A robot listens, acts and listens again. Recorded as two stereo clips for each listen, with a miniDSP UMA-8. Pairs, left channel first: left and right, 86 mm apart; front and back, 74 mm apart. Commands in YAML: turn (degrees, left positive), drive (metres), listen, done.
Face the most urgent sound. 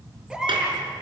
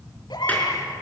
done: "Facing the baby crying."